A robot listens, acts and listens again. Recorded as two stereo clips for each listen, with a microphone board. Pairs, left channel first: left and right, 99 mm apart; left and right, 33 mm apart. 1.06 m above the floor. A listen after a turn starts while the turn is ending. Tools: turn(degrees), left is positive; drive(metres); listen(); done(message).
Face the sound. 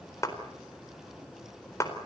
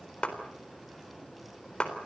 turn(degrees=30)
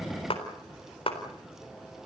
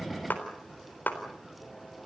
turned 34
turn(degrees=115)
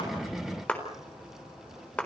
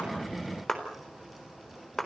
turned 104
turn(degrees=10)
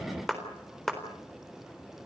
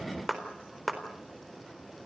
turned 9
done("Facing the clap.")